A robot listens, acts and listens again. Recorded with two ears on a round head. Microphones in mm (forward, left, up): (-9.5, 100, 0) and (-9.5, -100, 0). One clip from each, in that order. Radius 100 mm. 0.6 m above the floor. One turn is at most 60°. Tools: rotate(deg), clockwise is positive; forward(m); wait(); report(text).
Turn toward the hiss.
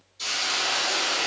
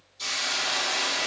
rotate(-30)
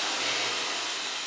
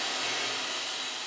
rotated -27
rotate(-60)
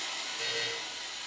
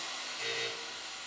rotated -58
rotate(-60)
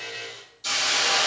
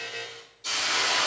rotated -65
rotate(-20)
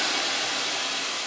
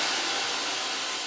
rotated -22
report("Found it: a hiss, straight ahead, 1 to 2 m away.")